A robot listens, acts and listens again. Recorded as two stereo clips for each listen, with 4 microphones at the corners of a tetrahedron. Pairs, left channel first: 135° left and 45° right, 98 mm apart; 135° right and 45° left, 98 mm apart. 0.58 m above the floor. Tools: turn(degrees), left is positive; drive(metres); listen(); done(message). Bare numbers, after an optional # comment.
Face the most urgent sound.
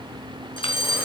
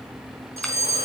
# The fire alarm: 105° left.
turn(105)
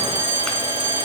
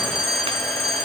# The fire alarm is now 20° left.
turn(20)
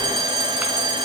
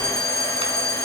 done("Found it: a fire alarm, straight ahead, over 4 m away.")